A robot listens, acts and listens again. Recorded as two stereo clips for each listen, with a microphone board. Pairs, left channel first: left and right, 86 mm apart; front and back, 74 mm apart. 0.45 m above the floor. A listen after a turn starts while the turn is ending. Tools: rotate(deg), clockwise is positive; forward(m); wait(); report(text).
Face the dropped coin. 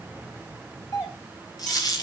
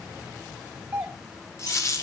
rotate(-45)
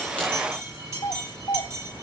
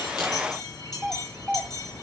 report("Facing where the dropped coin came from. I can't hear it now.")